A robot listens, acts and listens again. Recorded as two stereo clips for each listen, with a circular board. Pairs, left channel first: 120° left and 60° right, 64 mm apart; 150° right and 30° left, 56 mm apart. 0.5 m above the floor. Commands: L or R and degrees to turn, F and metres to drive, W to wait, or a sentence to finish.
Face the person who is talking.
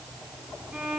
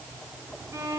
W
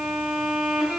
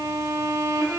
W
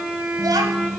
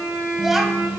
R55
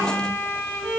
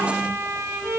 W
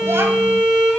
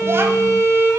Facing the child speaking.